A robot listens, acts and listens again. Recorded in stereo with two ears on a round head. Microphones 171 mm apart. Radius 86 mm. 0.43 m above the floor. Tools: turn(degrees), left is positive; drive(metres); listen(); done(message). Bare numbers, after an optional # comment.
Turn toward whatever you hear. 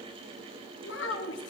# The child speaking: about 65° left or 115° left.
turn(65)
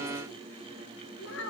# So it is at 70° left.
turn(70)
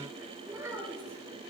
# The child speaking is now 15° right.
turn(-15)
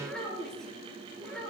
done("Found it: a child speaking, straight ahead.")